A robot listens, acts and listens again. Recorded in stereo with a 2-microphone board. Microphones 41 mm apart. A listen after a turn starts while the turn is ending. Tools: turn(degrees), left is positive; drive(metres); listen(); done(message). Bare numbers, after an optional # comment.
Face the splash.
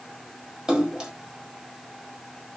# The splash: about 20° right or 160° right.
turn(-20)
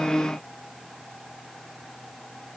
listen()
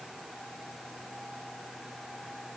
done("I heard a splash, but can't make it out now. It was about straight ahead or 140° right.")